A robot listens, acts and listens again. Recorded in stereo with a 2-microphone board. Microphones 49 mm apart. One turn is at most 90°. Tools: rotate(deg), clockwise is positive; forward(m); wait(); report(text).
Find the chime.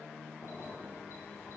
wait()
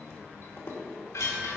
rotate(-90)
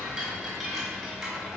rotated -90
report("Facing the chime.")